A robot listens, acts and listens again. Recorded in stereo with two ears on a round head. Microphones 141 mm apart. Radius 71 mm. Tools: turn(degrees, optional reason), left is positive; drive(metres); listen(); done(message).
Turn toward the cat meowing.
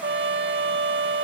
listen()
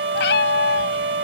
turn(degrees=90)
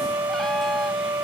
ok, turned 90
listen()
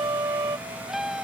done("Found it: a cat meowing, straight ahead.")